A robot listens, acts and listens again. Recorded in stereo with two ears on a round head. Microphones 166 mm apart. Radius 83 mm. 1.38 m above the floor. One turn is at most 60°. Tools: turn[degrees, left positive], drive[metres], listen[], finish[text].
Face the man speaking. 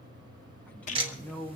Action: turn[30]
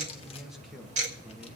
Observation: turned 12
Action: finish[Facing the man speaking, 1 to 2 m away.]